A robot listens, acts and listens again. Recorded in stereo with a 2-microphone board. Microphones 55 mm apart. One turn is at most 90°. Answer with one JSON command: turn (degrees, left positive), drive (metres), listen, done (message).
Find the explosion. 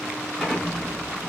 {"turn": -30}
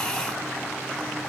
{"listen": true}
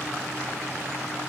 {"done": "I heard an explosion, but can't make it out now. It was about 15° left or 135° right."}